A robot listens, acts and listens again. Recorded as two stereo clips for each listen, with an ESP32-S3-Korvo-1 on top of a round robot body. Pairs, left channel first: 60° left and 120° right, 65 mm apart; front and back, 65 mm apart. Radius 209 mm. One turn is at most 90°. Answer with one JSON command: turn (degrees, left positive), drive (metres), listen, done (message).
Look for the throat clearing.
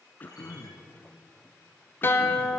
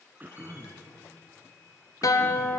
{"turn": 90}
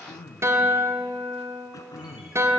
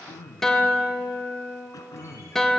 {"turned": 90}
{"turn": 30}
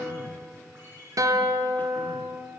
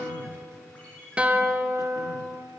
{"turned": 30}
{"done": "Facing the throat clearing, under 1 m away."}